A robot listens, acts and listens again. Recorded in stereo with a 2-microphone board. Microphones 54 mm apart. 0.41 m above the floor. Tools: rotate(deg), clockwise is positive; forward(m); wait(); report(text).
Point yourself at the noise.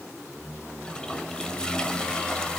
rotate(-30)
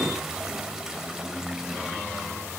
wait()
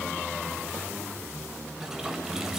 wait()
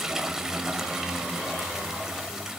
rotate(10)
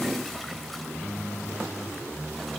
wait()
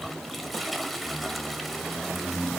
report("Facing the toilet flushing, 1 to 2 m away.")